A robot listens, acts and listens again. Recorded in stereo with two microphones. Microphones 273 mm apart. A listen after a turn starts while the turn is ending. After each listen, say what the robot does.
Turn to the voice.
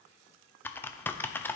Keep listening.
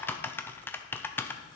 Keep listening.
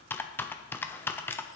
I can't make out anyone speaking, only typing on a keyboard.